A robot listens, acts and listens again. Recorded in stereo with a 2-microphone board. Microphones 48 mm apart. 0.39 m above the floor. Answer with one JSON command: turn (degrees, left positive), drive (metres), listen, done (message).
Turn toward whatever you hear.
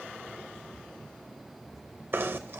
{"turn": -50}
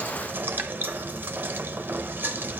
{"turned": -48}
{"turn": -65}
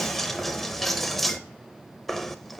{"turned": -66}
{"done": "Facing the knocking."}